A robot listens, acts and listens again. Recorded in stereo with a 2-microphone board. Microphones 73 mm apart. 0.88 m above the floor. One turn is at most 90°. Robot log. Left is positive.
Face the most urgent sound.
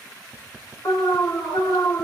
note: The alarm: about 40° left or 140° left.
cmd yaw +40
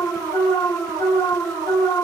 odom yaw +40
note: So it is at 95° left.
cmd yaw +90
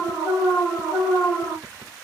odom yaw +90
note: The alarm is now 40° left.
cmd yaw +40
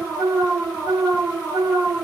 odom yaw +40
note: The alarm is now 15° right.
cmd yaw -15
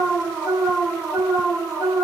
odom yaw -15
end: Facing the alarm, 2 to 4 m away.